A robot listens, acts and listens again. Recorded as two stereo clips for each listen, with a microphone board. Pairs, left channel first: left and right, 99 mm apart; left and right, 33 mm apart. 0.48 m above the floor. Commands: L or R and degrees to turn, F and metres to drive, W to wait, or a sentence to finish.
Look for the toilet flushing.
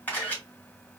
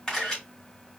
W
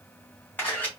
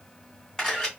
W
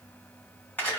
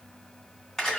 I can't make out a toilet flushing to turn to.